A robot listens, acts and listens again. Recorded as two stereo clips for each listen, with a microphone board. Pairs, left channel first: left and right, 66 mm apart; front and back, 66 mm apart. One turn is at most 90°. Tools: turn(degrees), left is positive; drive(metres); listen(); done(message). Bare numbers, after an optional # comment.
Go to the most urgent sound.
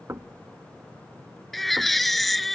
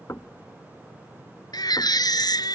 drive(1.0)
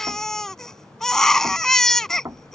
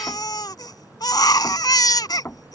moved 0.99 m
drive(1.0)
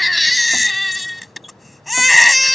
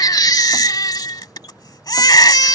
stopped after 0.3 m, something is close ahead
done("I am next to the baby crying.")